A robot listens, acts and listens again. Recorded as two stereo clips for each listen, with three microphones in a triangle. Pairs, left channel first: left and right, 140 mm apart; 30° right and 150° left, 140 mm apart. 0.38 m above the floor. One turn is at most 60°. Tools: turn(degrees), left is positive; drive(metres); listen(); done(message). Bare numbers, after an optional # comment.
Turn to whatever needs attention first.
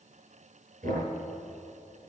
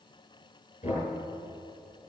listen()
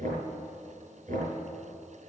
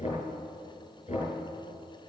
listen()
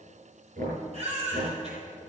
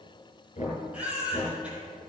# The baby crying: 130° right.
turn(-60)
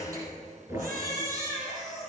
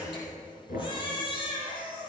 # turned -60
# The baby crying is now 85° right.
turn(-60)
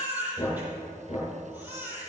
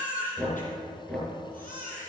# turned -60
# The baby crying is now 10° right.
turn(-10)
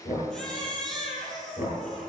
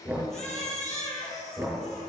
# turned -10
done("Facing the baby crying.")